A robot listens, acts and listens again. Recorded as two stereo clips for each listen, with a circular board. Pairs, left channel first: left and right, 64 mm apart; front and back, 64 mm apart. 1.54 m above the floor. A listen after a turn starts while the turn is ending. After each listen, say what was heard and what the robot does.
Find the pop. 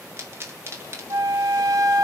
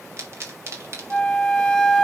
The pop: 135° right. Turn 135° right.
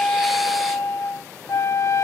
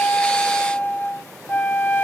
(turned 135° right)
Facing where the pop came from. I can't hear it now.